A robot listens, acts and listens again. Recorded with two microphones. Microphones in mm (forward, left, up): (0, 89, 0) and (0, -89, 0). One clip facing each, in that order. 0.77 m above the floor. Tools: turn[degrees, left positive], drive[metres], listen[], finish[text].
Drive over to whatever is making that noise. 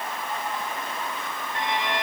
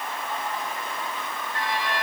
Thought: The violin: about 20° left or 160° left.
Action: turn[20]
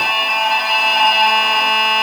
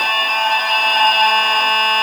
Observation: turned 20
Action: drive[1.0]
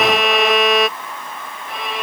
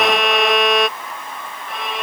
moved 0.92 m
Action: drive[1.0]
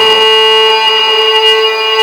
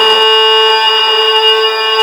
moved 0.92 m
Action: drive[1.0]
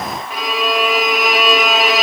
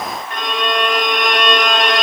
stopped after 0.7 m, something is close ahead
Action: finish[Arrived at the violin, straight ahead.]